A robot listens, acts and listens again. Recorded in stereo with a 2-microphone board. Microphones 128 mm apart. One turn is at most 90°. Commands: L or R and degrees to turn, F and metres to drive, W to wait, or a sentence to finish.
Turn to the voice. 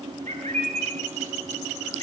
W
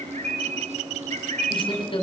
L45
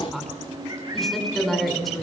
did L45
Facing the woman speaking, over 4 m away.